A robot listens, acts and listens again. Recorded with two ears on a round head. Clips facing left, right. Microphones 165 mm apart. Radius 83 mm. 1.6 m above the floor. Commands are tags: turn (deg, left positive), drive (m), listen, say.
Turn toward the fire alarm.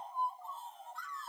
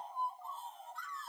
<listen/>
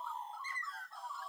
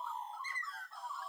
<listen/>
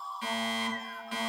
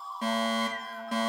<turn deg="-35"/>
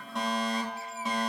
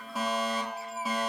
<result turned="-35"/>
<say>Facing the fire alarm, 2 to 4 m away.</say>